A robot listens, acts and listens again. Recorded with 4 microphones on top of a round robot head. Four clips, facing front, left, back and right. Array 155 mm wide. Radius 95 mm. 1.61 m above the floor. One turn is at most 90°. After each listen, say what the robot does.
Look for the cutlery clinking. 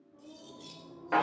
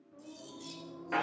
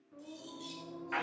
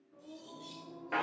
Turn 65° left.
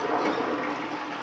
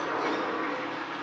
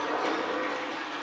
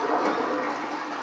Keep listening.
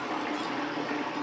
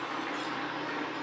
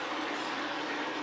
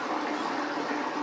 Keep listening.
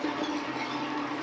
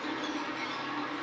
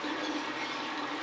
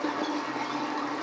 I heard cutlery clinking from this way, but can't make it out now.